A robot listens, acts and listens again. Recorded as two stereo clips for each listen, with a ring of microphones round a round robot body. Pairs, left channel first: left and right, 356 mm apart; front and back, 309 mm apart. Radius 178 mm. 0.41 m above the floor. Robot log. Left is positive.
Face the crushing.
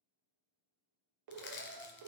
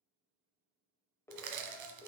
note: The crushing: 150° left.
cmd yaw +150
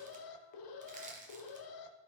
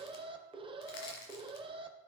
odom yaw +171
note: The crushing is now 20° right.
cmd yaw -20
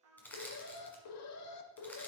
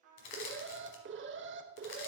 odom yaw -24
end: Facing the crushing.